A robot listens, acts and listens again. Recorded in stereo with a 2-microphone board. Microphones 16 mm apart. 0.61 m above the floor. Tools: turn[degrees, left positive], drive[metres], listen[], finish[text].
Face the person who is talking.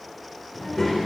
Thought: The child speaking: about 15° left or 165° left.
Action: turn[15]
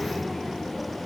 Thought: So it is at 150° left.
Action: turn[150]
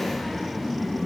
Action: finish[Facing the child speaking.]